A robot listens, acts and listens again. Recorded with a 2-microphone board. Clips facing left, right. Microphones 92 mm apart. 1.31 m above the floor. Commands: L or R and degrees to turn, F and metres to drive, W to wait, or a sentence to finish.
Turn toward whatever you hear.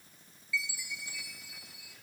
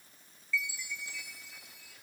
L30
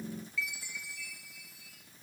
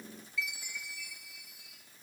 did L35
R20
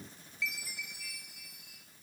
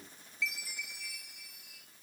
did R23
Found it: a chime, straight ahead, 1 to 2 m away.